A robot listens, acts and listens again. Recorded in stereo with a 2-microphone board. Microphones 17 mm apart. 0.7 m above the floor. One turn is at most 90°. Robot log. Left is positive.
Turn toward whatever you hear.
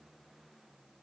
cmd idle
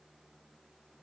cmd idle
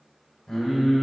note: The singing: about 40° left or 140° left.
cmd yaw +40
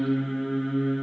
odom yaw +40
note: So it is at 100° left.
cmd yaw +90
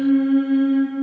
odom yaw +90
end: Facing the singing, 1 to 2 m away.